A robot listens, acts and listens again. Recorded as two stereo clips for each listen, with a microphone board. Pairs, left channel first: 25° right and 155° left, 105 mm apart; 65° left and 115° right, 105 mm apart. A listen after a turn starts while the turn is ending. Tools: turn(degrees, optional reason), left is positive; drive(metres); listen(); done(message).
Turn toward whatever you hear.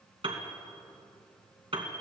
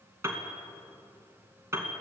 turn(degrees=-175, reason="The piano: 175° right.")
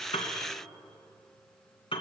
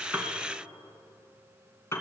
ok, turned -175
done("Found it: a piano, straight ahead.")